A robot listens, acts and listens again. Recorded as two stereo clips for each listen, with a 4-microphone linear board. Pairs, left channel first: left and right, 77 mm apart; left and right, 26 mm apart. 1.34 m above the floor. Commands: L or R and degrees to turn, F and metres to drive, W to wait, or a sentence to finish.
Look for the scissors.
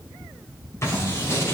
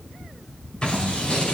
L40
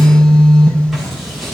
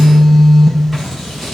Facing the scissors, over 4 m away.